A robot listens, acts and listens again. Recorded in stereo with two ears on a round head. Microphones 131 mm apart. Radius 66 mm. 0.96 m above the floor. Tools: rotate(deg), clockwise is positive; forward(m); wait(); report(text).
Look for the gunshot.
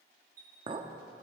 wait()
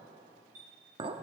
wait()
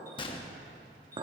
rotate(-35)
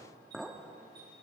wait()
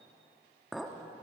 report("I heard a gunshot, but can't make it out now. It was about straight ahead or 110° left.")